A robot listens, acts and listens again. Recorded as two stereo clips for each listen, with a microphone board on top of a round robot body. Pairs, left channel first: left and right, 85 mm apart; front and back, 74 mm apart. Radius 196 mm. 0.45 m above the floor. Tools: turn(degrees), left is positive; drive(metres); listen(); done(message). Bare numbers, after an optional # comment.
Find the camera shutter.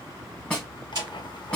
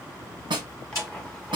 # The camera shutter: 50° right.
turn(-50)
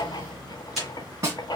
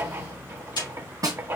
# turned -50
done("Facing the camera shutter, 2 to 4 m away.")